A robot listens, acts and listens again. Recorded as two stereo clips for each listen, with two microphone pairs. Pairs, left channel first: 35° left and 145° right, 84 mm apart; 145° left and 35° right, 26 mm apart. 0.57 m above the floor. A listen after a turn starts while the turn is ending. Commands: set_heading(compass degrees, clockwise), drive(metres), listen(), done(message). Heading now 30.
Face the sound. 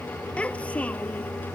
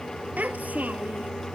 set_heading(65)
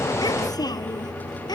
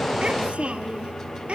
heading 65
done("Found it: a child speaking, straight ahead.")